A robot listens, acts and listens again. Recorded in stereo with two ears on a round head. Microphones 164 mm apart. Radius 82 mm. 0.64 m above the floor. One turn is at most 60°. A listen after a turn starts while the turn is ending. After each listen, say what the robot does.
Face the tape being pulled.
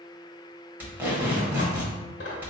Turn 30° right.
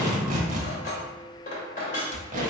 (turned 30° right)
Turn 60° right.
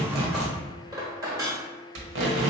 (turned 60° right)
Turn 60° right.
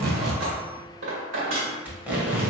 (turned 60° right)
Turn 10° right.
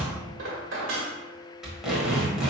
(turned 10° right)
Found it: tape being pulled, straight ahead, 1 to 2 m away.